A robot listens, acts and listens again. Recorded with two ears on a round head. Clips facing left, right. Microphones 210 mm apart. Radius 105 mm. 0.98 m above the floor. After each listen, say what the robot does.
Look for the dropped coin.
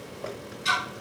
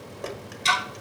Turn 50° right.
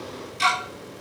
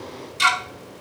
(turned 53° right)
Keep listening.
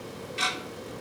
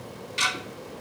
I heard a dropped coin, but can't make it out now. It was about 5° left or 80° right.